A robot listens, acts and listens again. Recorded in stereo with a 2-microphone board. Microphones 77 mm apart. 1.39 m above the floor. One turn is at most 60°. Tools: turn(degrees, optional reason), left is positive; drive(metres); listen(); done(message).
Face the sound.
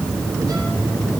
listen()
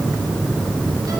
listen()
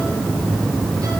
done("I can't make out anything.")